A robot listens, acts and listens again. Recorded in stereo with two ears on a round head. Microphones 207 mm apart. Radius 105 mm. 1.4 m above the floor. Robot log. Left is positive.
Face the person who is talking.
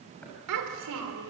cmd yaw -90
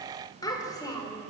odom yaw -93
note: So it is at 15° left.
cmd yaw +15
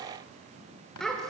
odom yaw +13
end: Facing the child speaking, 2 to 4 m away.